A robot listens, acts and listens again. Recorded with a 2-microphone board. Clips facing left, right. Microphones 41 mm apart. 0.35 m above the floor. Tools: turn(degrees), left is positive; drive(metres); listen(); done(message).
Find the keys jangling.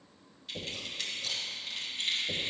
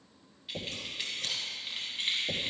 turn(degrees=-25)
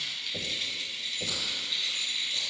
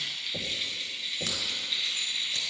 turn(degrees=-30)
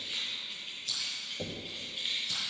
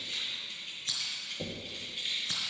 turn(degrees=10)
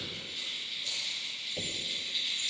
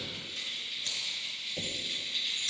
done("Found it: keys jangling, straight ahead, 2 to 4 m away.")